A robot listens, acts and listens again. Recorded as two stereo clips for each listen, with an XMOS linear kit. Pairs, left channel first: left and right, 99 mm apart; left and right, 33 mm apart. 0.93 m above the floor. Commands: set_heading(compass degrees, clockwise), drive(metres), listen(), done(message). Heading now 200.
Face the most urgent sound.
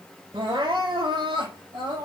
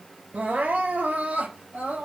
set_heading(255)
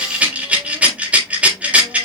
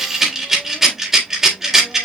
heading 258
listen()
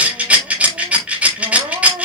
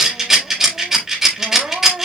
set_heading(323)
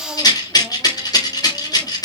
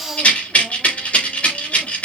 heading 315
set_heading(325)
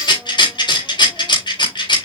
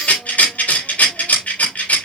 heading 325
listen()
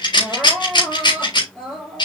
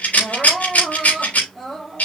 done("Found it: crying, straight ahead, 2 to 4 m away.")